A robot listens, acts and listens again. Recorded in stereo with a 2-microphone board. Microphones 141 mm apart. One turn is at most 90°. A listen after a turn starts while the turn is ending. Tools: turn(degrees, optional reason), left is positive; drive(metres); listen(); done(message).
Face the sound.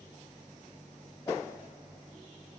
listen()
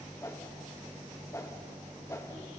turn(degrees=20, reason="The whoosh: about 20° left or 160° left.")
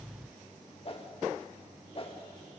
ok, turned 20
turn(degrees=90, reason="So it is at 135° left.")
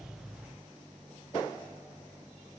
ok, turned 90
turn(degrees=45, reason="Nothing new. It was at 45° left.")
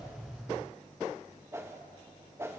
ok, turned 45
turn(degrees=-20, reason="The whoosh is now 20° right.")
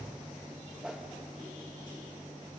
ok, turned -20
done("Found it: a whoosh, straight ahead, 2 to 4 m away.")